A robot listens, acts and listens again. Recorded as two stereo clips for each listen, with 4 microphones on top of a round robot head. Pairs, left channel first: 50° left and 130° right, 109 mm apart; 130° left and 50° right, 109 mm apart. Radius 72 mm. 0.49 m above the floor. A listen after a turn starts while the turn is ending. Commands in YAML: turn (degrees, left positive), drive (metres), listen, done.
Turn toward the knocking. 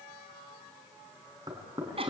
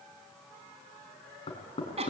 turn: 175
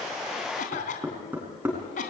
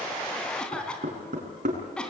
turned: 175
turn: -55
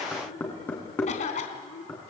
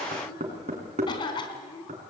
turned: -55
turn: -25
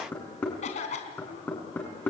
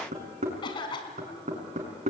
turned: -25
turn: -25
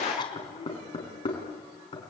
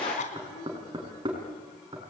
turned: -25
done: "Facing the knocking."